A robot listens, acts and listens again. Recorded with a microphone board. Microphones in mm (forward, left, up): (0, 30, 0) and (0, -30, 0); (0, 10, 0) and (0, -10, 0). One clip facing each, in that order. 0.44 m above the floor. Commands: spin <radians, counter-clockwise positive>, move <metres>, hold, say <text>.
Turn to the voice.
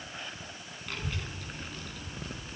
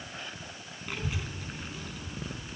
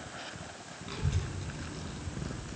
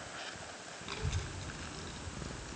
spin -0.52
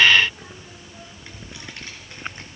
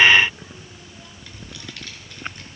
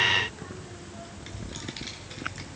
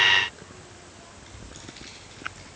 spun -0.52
spin 0.52
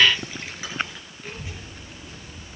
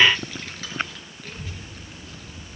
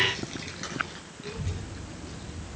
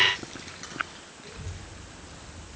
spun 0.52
spin 0.26
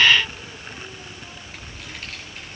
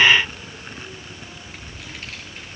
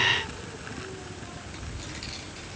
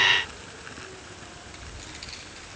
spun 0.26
say Found it: a child speaking, straight ahead.